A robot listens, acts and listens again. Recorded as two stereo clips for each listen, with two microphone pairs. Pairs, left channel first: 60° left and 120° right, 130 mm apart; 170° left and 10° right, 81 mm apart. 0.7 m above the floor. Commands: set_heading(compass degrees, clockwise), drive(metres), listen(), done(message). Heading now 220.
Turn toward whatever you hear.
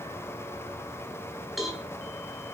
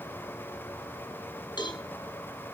set_heading(70)
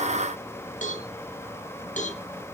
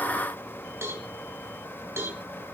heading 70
set_heading(20)
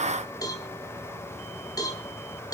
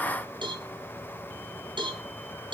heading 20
done("Facing the cowbell, over 4 m away.")